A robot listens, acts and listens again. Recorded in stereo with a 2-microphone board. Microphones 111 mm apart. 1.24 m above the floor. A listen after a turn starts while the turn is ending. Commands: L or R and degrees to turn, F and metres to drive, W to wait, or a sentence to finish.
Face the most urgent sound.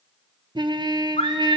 L75
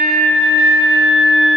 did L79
Found it: a scream, straight ahead, 2 to 4 m away.